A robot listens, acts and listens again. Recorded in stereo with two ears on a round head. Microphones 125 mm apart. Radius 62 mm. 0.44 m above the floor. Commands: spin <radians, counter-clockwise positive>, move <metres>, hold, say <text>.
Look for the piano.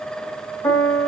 spin 0.44
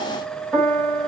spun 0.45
say Found it: a piano, straight ahead, 2 to 4 m away.